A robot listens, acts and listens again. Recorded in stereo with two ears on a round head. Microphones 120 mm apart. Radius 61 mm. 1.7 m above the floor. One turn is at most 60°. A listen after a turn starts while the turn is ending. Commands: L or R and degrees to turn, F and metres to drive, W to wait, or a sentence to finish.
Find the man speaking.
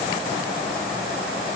W
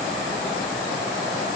W
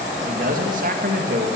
R60
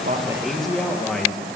Found it: a man speaking, straight ahead, 2 to 4 m away.